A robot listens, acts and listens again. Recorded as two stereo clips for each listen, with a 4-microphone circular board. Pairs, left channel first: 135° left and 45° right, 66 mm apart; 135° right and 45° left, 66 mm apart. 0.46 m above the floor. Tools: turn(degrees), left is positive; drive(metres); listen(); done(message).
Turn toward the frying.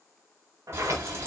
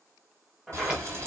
done("Facing the frying, 2 to 4 m away.")